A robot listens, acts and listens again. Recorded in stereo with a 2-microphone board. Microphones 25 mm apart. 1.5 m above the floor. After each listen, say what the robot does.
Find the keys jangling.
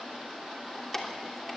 Turn 30° left.
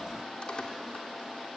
Keep listening.
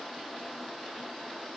Keep listening.
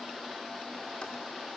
I heard keys jangling, but can't make it out now. It was about 15° right or 135° left.